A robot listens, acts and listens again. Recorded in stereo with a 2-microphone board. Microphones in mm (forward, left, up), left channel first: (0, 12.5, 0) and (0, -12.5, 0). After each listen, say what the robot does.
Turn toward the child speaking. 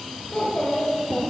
Turn 60° left.
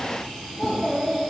Turn 50° left.
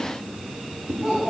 Turn 15° right.
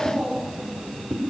Facing the child speaking, 2 to 4 m away.